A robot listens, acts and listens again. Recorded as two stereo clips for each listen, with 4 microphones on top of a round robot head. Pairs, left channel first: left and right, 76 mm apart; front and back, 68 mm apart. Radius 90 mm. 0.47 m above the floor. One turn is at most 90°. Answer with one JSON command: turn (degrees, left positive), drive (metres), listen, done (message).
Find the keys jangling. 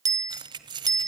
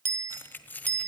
{"turn": -70}
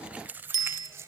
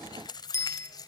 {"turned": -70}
{"turn": -30}
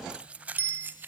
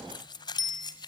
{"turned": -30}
{"turn": -25}
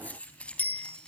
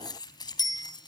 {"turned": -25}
{"turn": 10}
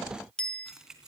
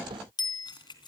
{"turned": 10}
{"done": "Found it: keys jangling, straight ahead, 2 to 4 m away."}